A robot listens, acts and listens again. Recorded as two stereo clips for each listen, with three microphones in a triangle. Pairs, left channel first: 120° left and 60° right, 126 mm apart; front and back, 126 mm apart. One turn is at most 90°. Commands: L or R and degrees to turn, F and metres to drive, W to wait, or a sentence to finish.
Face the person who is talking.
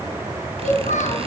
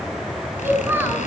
L90
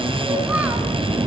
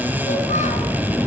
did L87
L20
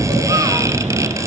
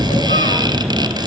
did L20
W
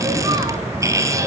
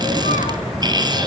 Facing where the child speaking came from. I can't hear it now.